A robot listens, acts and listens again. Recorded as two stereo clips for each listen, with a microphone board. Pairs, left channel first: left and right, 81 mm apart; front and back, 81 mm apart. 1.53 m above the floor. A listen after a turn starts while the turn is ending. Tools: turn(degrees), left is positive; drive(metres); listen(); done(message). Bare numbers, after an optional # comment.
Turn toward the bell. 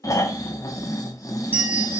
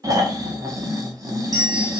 # The bell: 150° right.
turn(-150)
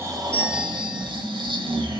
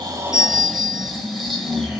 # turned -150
# The bell is now 20° right.
turn(-20)
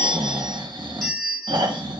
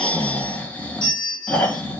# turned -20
done("Found it: a bell, straight ahead, 1 to 2 m away.")